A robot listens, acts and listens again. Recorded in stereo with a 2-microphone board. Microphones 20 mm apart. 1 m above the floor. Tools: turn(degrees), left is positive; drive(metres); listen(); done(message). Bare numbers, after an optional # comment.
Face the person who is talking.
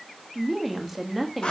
turn(30)
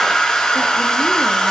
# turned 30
listen()
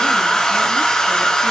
listen()
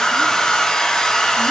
done("I heard a woman speaking, but can't make it out now. It was about 30° right or 150° left.")